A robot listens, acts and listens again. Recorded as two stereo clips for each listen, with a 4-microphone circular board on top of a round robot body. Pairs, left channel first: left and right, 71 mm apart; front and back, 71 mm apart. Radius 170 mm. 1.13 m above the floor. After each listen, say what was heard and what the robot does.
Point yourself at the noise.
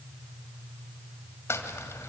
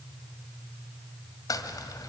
The crumpling: 35° left. Turn 35° left.
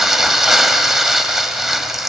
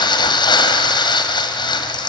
Facing the crumpling, 1 to 2 m away.